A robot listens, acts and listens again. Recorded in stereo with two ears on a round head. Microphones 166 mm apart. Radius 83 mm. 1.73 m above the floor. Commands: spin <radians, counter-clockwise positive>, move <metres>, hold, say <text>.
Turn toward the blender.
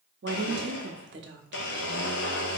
spin 1.13
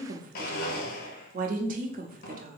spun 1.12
spin 0.87
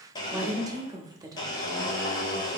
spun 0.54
spin 0.35
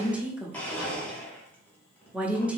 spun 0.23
spin 0.17
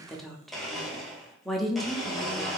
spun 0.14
say Facing the blender.